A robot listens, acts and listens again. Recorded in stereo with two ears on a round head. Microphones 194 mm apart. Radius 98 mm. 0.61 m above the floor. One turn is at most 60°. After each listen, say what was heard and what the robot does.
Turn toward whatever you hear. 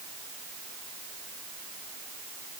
Keep listening.
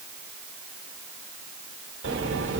The sliding door: about 55° right or 125° right. Turn 55° right.
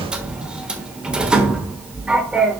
Facing the sliding door, 1 to 2 m away.